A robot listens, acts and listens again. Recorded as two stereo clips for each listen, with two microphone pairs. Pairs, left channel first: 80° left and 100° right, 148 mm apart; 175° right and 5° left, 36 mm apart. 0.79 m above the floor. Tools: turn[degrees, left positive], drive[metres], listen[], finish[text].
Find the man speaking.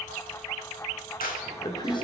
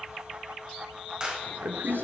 Thought: The man speaking: 20° left.
Action: turn[20]
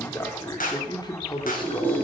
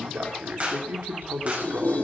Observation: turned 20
Thought: The man speaking is now 25° left.
Action: turn[25]
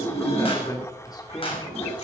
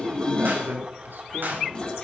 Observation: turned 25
Thought: The man speaking is now 10° left.
Action: turn[10]
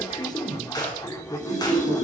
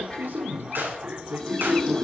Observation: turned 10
Thought: The man speaking is now 20° left.
Action: turn[20]
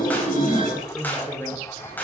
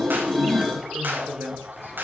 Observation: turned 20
Action: finish[Found it: a man speaking, straight ahead, 2 to 4 m away.]